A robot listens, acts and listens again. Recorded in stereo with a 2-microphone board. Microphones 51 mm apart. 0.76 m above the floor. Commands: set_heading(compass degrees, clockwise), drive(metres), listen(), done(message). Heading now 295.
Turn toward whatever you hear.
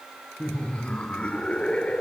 set_heading(270)
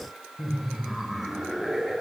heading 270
done("Facing the laughter, 2 to 4 m away.")